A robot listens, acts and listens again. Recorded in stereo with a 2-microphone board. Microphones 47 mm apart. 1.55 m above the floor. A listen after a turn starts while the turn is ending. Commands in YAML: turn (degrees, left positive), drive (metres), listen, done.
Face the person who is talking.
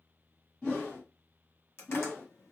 listen: true
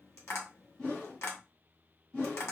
listen: true
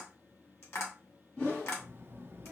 turn: -55
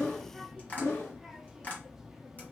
turn: -10
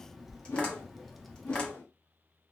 done: "Facing the child speaking, under 1 m away."